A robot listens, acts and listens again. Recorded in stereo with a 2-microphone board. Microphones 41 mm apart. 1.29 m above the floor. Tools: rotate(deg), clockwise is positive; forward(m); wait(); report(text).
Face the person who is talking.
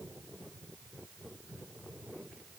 wait()
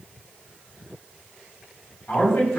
rotate(-70)
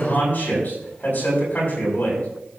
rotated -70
rotate(-45)
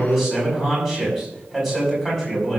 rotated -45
rotate(10)
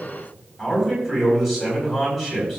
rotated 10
report("Found it: a man speaking, straight ahead.")